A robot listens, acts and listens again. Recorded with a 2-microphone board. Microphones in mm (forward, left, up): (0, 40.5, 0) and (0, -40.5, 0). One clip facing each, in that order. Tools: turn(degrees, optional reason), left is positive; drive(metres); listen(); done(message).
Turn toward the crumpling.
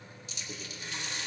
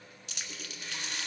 turn(degrees=-90)
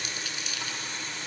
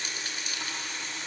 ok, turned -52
turn(degrees=-40, reason="Nothing new. It was at 40° right.")
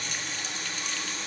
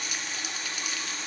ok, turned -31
listen()
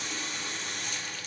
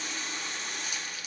done("I heard crumpling from this way, but can't make it out now.")